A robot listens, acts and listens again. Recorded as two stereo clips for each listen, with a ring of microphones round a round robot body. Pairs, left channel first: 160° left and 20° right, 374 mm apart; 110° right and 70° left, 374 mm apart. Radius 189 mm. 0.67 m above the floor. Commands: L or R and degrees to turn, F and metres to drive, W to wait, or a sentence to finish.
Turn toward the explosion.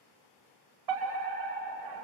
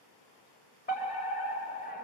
W
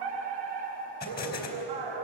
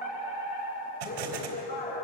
L90
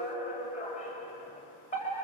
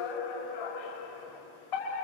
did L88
I heard an explosion from this way, but can't make it out now.